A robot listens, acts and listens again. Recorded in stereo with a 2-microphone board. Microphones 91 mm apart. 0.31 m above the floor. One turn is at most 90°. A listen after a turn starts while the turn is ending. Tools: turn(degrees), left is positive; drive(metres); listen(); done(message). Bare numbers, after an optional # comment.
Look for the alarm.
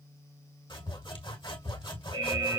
# The alarm: about 65° right or 115° right.
turn(-65)
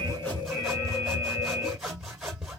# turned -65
# So it is at 40° right.
turn(-40)
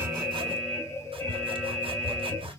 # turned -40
# The alarm is now 25° left.
turn(25)
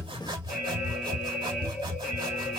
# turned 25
done("Found it: an alarm, straight ahead.")